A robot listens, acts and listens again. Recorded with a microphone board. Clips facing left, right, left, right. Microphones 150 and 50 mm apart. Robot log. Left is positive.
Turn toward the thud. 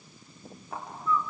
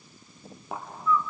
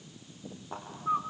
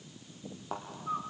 cmd yaw -90
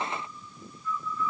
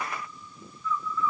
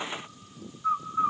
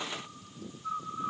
end: Facing where the thud came from. I can't hear it now.